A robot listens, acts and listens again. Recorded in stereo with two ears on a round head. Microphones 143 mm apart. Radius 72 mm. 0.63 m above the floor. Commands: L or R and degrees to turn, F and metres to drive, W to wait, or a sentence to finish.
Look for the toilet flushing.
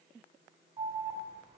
W
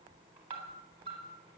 W
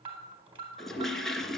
L30
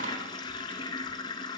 L150
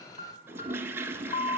R15
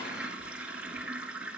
R10
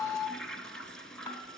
Found it: a toilet flushing, straight ahead, 1 to 2 m away.